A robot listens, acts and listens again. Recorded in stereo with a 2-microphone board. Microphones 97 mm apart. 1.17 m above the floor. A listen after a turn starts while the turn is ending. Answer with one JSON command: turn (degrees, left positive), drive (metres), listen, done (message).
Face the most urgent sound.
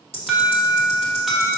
{"turn": 30}
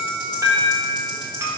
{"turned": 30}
{"turn": -35}
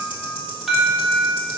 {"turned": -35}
{"done": "Found it: an alarm, straight ahead."}